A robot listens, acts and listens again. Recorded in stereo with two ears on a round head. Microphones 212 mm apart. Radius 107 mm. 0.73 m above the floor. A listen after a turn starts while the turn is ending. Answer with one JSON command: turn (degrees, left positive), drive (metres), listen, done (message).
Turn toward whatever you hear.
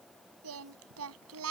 {"turn": -70}
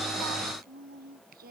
{"turn": -40}
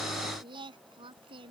{"turn": -20}
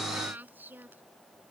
{"turn": -10}
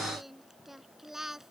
{"done": "Found it: singing, straight ahead."}